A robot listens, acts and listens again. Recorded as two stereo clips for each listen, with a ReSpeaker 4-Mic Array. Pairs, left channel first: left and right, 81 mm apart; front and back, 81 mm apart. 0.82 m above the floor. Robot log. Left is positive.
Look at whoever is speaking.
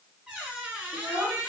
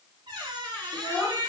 note: The child speaking: 35° right.
cmd yaw -35
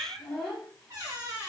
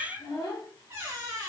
end: Found it: a child speaking, straight ahead.